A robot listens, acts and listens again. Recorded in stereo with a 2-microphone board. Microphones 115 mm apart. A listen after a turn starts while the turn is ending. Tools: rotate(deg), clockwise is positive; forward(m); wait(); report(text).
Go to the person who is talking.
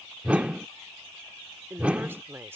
rotate(20)
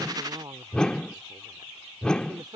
rotate(135)
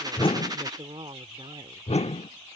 rotate(60)
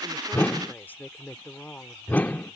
rotate(-20)
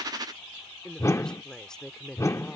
forward(1.0)
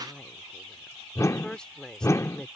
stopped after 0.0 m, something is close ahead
rotate(-10)
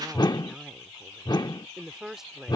report("Blocked. The woman speaking is further on, straight ahead.")